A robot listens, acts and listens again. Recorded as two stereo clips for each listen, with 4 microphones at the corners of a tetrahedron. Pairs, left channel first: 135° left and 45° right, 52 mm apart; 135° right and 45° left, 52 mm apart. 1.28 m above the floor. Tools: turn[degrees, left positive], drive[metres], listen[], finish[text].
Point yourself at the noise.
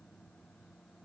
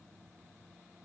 Action: listen[]
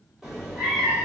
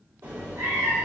Thought: The cat meowing: 40° left.
Action: turn[40]
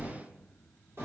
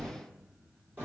Thought: The cat meowing is now 10° right.
Action: turn[-10]
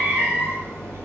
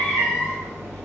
Action: finish[Facing the cat meowing.]